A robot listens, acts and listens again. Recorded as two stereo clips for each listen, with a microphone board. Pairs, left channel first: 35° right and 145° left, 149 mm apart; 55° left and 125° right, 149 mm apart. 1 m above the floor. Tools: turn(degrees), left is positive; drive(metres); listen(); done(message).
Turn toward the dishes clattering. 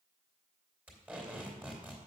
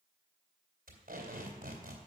listen()
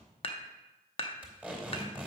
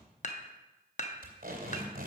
turn(degrees=20)
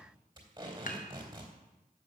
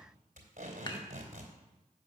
listen()
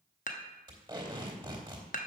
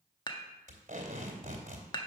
done("Facing the dishes clattering, under 1 m away.")